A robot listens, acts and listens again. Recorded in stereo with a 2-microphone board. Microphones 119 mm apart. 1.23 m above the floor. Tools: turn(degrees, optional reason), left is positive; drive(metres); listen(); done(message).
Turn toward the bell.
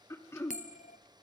turn(degrees=75, reason="The bell: about 75° left or 105° left.")
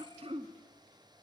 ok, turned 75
listen()
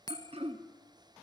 turn(degrees=30, reason="So it is at 30° left.")
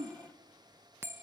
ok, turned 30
turn(degrees=-20, reason="The bell is now 20° right.")
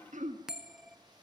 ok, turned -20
done("Found it: a bell, straight ahead.")